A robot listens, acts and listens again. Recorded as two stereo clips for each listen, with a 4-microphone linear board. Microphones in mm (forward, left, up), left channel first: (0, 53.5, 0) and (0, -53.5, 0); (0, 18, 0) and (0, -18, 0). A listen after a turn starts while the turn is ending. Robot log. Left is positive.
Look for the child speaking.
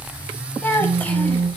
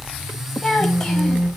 note: The child speaking: about 15° left or 165° left.
cmd yaw +15
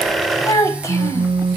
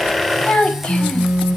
note: So it is at 150° left.
cmd yaw +150
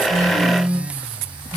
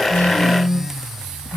cmd idle
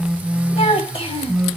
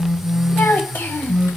note: The child speaking is now 75° left.
cmd yaw +75
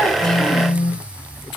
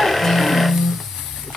cmd idle
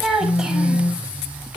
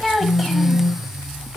end: Facing the child speaking, 1 to 2 m away.